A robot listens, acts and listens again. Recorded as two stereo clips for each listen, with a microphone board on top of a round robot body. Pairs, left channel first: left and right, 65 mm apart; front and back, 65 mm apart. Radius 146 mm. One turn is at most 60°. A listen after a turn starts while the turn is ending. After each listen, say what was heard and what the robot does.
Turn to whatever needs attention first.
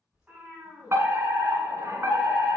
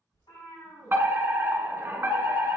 The fire alarm: 130° right. Turn 60° right.
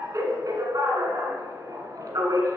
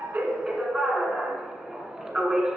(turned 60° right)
The fire alarm is now 95° right. Turn 60° right.
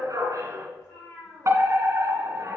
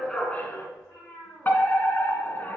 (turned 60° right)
The fire alarm is now 55° right. Turn 55° right.
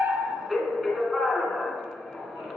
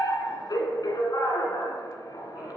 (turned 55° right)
Facing the fire alarm, 1 to 2 m away.